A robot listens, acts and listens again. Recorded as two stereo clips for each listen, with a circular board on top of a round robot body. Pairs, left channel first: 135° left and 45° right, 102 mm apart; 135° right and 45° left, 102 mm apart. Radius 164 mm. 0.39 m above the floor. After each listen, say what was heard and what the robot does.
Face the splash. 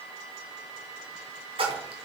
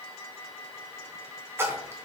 The splash: 20° right. Turn 20° right.
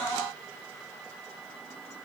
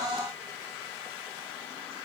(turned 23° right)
Facing where the splash came from. I can't hear it now.